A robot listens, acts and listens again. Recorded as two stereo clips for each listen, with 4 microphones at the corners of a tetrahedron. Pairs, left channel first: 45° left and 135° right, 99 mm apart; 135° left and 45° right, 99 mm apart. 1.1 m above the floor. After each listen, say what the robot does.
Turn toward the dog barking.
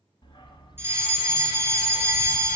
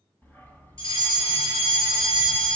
Turn 70° left.
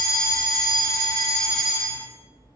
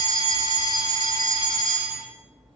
Turn 15° left.
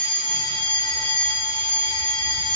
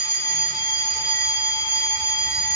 Keep listening.
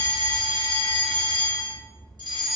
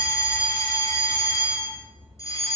Found it: a dog barking, straight ahead.